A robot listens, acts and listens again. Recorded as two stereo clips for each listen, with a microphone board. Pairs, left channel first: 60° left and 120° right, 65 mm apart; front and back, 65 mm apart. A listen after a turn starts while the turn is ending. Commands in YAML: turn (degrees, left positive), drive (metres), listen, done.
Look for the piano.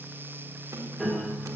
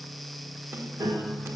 turn: 140
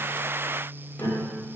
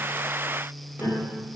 turn: 45
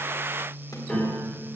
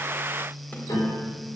turn: -20
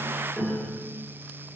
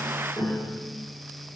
turn: -10
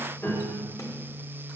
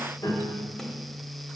done: "Found it: a piano, straight ahead."